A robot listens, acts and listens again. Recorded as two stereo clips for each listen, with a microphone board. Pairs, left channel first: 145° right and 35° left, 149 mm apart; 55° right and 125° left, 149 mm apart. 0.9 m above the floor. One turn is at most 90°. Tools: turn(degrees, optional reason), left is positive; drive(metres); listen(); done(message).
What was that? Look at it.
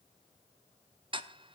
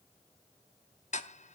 turn(degrees=-20, reason="The ticking: 20° right.")
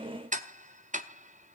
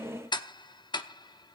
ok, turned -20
done("Facing the ticking, under 1 m away.")